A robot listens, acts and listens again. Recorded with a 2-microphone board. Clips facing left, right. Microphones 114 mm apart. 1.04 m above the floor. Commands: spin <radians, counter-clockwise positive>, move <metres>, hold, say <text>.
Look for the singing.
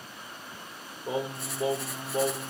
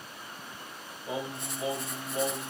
spin 0.70
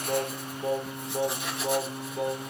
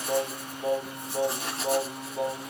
say Facing the singing.